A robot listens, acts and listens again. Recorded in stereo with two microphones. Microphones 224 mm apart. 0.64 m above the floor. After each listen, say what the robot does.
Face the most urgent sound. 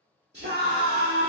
Turn 50° right.
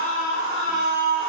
Turn 75° right.
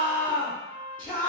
Turn 10° left.
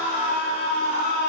Facing the scream.